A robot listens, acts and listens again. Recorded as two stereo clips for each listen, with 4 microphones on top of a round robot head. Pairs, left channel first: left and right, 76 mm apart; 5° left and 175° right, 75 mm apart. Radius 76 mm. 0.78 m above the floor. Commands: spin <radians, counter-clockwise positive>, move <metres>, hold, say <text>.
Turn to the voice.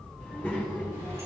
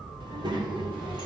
spin 2.88
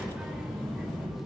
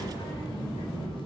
say Found it: a child speaking, straight ahead.